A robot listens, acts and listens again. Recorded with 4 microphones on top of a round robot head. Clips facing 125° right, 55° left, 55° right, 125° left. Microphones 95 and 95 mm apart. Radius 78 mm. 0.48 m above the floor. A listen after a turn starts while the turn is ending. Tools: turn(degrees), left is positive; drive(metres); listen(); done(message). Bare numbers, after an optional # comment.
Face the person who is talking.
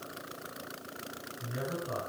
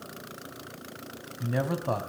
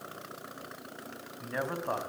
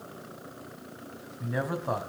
# The man speaking: 40° left.
turn(40)
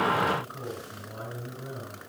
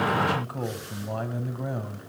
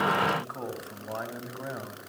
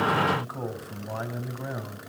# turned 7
# The man speaking is now 35° left.
turn(35)
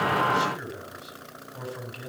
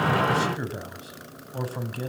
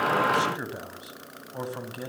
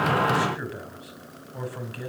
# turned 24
# The man speaking is now 10° left.
turn(10)
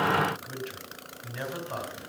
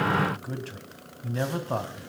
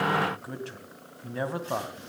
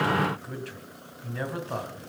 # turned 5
done("Facing the man speaking, 2 to 4 m away.")